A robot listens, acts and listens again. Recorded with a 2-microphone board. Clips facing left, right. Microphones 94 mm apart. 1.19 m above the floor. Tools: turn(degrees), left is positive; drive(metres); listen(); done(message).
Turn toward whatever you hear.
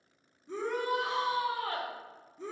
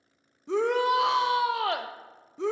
turn(degrees=-90)
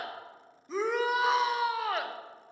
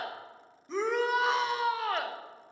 done("Facing the shout, under 1 m away.")